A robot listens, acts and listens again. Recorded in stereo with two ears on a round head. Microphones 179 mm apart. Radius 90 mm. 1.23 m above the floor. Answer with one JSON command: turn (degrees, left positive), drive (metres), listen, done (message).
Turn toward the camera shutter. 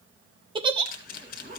{"turn": 45}
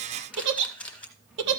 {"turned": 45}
{"done": "Found it: a camera shutter, straight ahead."}